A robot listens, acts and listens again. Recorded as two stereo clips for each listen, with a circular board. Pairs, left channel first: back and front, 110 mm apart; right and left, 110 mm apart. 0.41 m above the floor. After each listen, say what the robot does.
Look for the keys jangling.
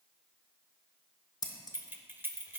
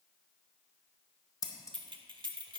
Turn 65° left.
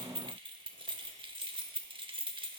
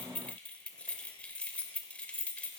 Turn 15° right.
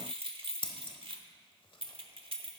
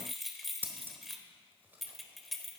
Facing the keys jangling, under 1 m away.